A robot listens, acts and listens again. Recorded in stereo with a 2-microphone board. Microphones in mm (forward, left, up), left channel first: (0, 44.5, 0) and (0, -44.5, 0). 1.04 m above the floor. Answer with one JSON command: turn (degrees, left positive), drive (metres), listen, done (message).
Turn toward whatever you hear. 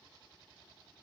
{"listen": true}
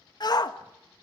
{"turn": 50}
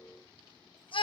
{"turn": 80}
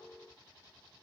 {"listen": true}
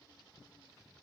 {"listen": true}
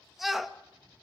{"done": "Found it: a shout, straight ahead."}